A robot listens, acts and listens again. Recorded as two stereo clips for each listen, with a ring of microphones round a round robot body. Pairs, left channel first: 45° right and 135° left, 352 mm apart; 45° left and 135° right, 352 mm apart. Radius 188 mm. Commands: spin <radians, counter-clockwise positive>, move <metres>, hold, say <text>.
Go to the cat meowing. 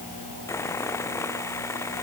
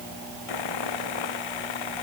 hold
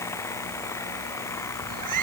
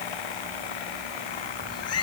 spin 1.66
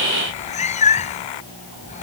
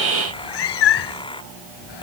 spin 0.44
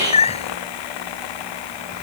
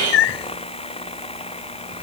spin 0.52
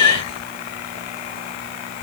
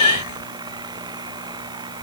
move 1.0
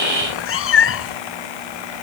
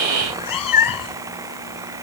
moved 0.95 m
spin 0.17
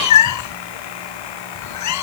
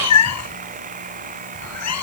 move 1.0
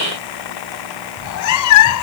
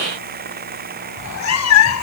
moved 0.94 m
move 1.0
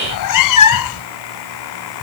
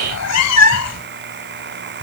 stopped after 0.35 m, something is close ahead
say Arrived at the cat meowing, straight ahead.